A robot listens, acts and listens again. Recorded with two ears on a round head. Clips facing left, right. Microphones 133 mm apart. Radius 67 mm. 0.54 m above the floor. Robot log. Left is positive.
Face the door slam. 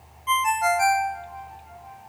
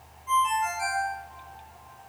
cmd idle
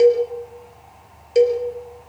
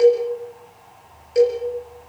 cmd idle
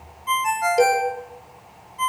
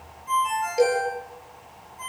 end: I can't make out a door slam to turn to.